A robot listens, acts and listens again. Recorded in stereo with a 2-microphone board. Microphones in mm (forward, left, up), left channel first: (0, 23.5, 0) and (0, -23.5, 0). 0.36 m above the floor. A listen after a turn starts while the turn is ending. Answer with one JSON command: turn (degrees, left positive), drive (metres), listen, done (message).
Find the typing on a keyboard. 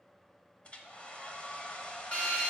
{"listen": true}
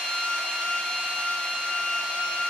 {"listen": true}
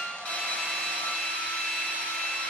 {"done": "I can't make out typing on a keyboard, only a hair dryer and a drill."}